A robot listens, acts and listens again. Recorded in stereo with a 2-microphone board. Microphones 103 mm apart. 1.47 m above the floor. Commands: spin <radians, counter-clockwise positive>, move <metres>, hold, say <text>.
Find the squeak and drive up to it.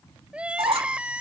spin -1.13
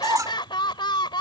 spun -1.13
spin -0.61
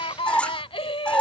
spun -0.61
spin 0.26
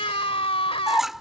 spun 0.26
move 1.0
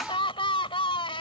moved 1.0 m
hold
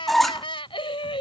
move 1.0
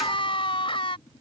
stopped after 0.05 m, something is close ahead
hold
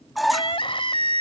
say Arrived at the squeak, straight ahead.